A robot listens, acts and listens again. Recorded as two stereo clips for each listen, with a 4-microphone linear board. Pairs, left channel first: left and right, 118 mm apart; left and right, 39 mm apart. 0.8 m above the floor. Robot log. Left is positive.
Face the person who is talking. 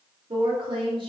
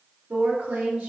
note: The woman speaking: about 45° right or 135° right.
cmd yaw -45
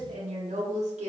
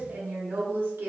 note: So it is at 85° right.
cmd yaw -85
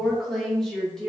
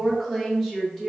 end: Found it: a woman speaking, straight ahead, 1 to 2 m away.